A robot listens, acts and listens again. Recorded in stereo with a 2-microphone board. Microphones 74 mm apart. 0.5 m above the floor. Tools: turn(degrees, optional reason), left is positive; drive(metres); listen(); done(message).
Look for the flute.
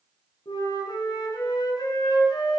turn(degrees=70, reason="The flute: about 70° left or 110° left.")
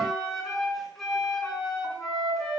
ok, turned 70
done("Facing the flute, over 4 m away.")